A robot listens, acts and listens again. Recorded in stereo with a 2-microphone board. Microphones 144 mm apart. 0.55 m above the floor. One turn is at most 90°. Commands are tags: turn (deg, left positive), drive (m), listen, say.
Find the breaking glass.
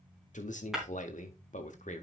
<turn deg="30"/>
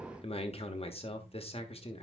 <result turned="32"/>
<listen/>
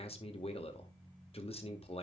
<say>I heard breaking glass, but can't make it out now. It was about 35° right or 150° left.</say>